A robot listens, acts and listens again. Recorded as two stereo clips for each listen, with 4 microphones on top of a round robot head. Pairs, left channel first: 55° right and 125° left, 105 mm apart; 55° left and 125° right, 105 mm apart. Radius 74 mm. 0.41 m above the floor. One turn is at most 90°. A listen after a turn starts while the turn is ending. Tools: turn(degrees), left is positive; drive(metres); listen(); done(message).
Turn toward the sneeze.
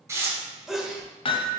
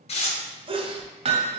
turn(degrees=-90)
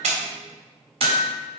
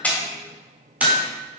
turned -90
turn(degrees=-55)
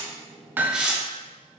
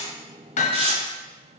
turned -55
done("Facing where the sneeze came from. I can't hear it now.")